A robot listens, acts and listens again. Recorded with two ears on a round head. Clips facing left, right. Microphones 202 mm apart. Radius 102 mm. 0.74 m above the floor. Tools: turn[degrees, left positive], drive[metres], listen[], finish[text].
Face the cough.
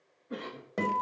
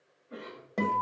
Thought: The cough: about 55° left or 125° left.
Action: turn[55]
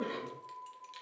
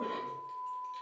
Action: listen[]
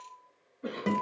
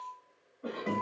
Thought: So it is at 30° left.
Action: turn[30]
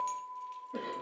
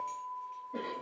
Action: listen[]
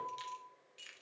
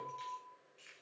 Action: listen[]
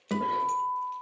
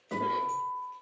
Action: finish[Facing where the cough came from. I can't hear it now.]